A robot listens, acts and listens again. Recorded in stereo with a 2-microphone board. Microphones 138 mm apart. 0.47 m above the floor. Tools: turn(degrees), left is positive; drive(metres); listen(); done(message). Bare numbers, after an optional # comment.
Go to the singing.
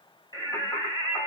# The singing: about 30° left or 150° left.
turn(30)
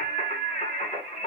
# So it is at 120° left.
turn(120)
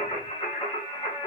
# The singing is now 40° left.
turn(40)
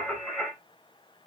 drive(1.0)
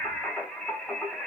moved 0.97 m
drive(1.0)
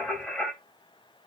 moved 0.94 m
# The singing is now 10° left.
turn(10)
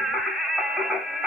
drive(1.0)
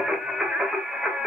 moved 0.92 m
drive(1.0)
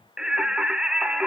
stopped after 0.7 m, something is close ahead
done("Arrived at the singing, straight ahead.")